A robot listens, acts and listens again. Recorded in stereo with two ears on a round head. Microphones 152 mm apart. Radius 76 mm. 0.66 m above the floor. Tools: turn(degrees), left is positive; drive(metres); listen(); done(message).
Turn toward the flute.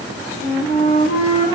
turn(degrees=55)
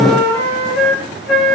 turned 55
done("Facing the flute.")